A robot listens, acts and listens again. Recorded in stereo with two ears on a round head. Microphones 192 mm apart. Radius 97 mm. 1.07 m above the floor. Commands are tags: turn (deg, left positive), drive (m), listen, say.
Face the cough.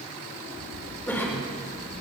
<turn deg="30"/>
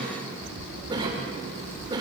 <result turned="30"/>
<turn deg="-20"/>
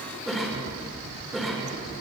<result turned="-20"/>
<say>Facing the cough, 2 to 4 m away.</say>